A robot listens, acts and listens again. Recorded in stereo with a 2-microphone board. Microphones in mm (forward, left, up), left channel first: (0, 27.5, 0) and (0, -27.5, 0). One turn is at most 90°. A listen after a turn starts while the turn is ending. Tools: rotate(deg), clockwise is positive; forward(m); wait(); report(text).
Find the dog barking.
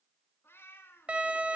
wait()
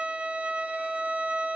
wait()
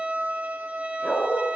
rotate(-20)
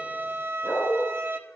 rotate(-90)
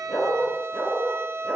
rotate(-30)
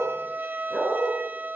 rotate(-15)
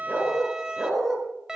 report("Found it: a dog barking, straight ahead.")